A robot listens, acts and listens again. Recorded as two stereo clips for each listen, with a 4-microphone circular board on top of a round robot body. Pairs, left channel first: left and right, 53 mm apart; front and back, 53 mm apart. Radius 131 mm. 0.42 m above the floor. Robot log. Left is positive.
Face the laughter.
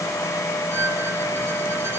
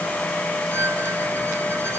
cmd idle
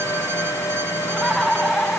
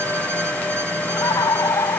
end: Found it: laughter, straight ahead.